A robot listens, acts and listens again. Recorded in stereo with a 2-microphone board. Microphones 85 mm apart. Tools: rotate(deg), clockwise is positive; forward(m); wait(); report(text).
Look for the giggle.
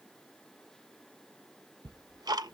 wait()
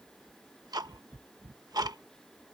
wait()
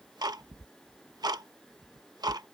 report("I can't make out a giggle to turn to.")